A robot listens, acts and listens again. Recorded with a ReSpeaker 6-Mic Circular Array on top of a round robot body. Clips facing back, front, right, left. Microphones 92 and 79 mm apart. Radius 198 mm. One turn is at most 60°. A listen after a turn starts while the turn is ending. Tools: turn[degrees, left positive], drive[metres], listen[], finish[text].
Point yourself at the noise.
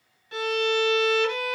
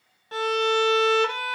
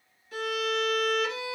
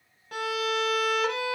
Thought: The violin: 55° left.
Action: turn[55]
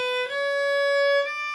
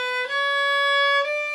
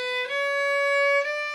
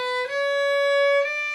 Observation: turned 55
Action: finish[Found it: a violin, straight ahead, under 1 m away.]